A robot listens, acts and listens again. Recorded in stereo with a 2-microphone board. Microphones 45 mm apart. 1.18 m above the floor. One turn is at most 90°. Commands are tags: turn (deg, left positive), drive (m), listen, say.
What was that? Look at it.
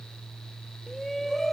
<turn deg="30"/>
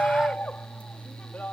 <turn deg="90"/>
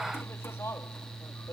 <turn deg="75"/>
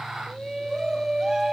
<turn deg="-15"/>
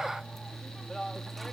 <listen/>
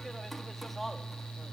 <listen/>
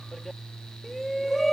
<say>Facing the shout.</say>